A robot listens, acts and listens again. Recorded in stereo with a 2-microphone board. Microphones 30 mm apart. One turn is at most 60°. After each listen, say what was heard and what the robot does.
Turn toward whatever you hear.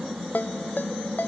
Turn 60° left.
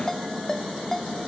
So it is at 15° left. Turn 15° left.
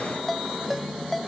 Facing the ringtone.